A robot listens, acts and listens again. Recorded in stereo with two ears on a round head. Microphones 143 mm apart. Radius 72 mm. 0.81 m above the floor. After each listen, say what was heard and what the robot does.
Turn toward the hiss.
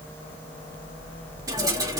The hiss: about 25° right or 155° right. Turn 25° right.
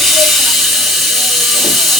Found it: a hiss, straight ahead.